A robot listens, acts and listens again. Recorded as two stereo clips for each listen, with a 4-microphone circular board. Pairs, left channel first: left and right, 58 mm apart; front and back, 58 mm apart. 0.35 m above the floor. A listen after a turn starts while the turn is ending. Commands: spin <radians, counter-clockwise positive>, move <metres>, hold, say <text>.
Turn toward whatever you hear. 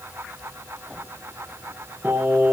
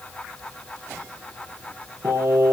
spin -2.44
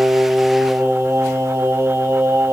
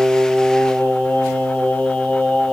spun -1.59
spin -1.05
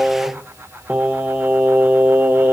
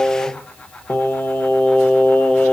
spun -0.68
spin -1.05
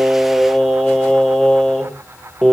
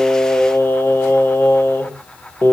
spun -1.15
spin 0.17
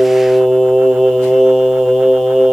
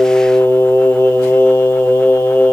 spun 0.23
say Found it: singing, straight ahead.